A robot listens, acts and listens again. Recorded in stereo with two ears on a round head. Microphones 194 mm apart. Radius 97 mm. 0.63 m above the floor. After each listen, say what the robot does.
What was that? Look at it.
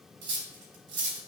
Turn 50° right.
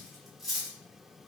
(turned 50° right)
Facing the cutlery clinking, under 1 m away.